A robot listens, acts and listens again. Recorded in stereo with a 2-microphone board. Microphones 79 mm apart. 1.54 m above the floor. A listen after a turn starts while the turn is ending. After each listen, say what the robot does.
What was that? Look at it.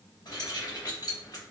Turn 55° left.
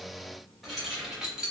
Turn 10° right.
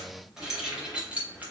Turn 20° right.
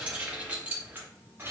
Turn 30° right.
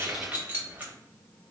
Turn 20° right.
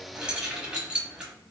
Turn 10° right.
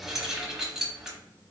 Found it: keys jangling, straight ahead.